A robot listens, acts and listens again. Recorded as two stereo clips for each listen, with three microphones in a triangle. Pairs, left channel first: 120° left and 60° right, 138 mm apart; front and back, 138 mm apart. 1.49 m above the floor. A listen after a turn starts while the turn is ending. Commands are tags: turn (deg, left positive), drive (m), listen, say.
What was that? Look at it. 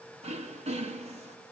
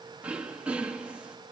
<turn deg="-100"/>
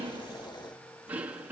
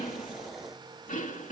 <turn deg="20"/>
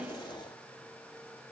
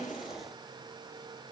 <listen/>
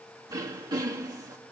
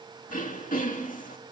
<say>Facing the throat clearing.</say>